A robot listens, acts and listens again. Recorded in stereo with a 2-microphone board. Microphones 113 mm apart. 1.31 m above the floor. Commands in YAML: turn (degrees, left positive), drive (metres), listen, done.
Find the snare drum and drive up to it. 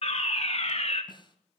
turn: 40
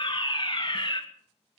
listen: true
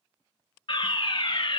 listen: true
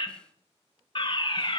done: "I heard a snare drum, but can't make it out now. It was about straight ahead or 100° left. I did not reach it."